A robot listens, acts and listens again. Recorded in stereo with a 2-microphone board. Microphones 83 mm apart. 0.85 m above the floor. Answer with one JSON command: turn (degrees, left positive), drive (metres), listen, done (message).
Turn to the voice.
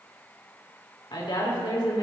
{"turn": 70}
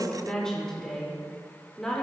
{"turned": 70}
{"turn": 10}
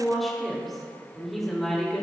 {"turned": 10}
{"done": "Found it: a woman speaking, straight ahead, 2 to 4 m away."}